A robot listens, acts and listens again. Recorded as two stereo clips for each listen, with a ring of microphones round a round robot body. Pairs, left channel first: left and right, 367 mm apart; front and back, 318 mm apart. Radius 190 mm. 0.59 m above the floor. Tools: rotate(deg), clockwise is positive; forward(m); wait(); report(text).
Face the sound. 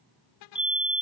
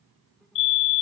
report("Facing the fire alarm.")